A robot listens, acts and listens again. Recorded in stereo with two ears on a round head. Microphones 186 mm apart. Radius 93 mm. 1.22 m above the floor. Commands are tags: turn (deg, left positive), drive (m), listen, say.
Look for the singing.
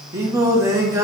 <turn deg="-30"/>
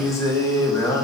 <turn deg="15"/>
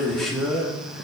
<say>Facing the singing, 1 to 2 m away.</say>